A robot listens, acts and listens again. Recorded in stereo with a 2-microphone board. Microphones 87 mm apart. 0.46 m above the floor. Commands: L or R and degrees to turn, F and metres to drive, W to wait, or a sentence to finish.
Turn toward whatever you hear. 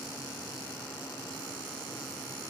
W
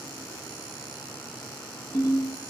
L55
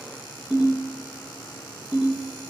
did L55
Facing the ringtone, 1 to 2 m away.